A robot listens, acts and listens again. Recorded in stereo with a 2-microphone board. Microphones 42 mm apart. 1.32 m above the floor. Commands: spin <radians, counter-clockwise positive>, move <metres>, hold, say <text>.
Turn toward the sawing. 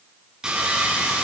spin -0.35
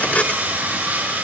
spin -2.53
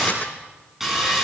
say Facing the sawing, over 4 m away.